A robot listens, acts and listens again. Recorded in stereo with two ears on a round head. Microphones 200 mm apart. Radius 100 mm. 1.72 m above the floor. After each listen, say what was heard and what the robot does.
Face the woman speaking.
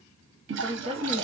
The woman speaking: about 30° right or 150° right. Turn 30° right.
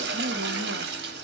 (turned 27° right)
Keep listening.
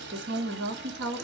So it is at 120° right. Turn 120° right.
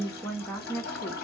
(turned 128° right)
Facing the woman speaking.